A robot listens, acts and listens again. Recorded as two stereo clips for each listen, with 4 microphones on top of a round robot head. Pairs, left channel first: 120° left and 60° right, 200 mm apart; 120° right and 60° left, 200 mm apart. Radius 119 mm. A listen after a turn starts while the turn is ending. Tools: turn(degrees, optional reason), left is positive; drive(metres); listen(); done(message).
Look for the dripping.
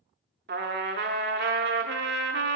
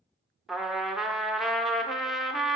listen()
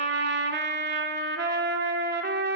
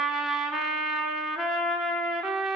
listen()
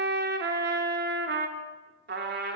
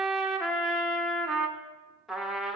done("I can't make out dripping to turn to.")